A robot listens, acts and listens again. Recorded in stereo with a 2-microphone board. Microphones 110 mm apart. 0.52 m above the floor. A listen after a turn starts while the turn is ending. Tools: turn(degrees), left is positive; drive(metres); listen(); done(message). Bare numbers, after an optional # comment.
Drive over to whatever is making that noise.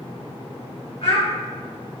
# The child speaking: about 65° left or 115° left.
turn(65)
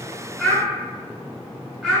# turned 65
# So it is at 10° left.
turn(10)
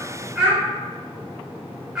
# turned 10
drive(1.0)
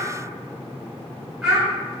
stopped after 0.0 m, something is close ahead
done("Blocked. The child speaking is further on, straight ahead.")